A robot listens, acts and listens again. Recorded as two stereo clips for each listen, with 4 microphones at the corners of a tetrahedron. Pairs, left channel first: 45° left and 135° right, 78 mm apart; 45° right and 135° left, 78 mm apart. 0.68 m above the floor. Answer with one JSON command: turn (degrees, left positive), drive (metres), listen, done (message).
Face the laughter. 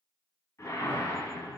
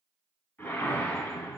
{"listen": true}
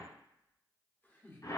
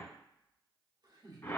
{"turn": 105}
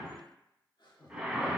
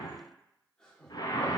{"turn": 35}
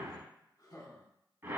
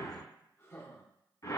{"turn": 10}
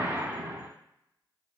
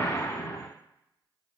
{"listen": true}
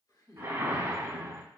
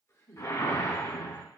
{"done": "Found it: laughter, straight ahead."}